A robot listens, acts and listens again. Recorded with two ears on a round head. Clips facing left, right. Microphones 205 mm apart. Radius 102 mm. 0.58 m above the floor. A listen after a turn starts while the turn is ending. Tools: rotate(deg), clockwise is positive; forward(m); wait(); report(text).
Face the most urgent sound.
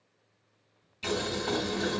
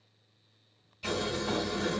wait()
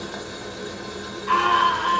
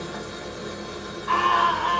rotate(-45)
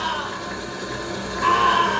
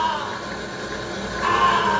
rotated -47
rotate(-80)
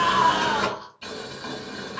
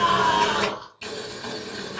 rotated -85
report("Found it: a scream, straight ahead.")